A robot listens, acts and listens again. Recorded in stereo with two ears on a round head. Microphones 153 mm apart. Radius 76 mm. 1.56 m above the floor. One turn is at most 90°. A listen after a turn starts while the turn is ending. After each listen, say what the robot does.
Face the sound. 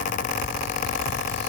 Keep listening.
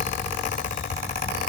Keep listening.
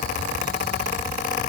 I can't make out anything.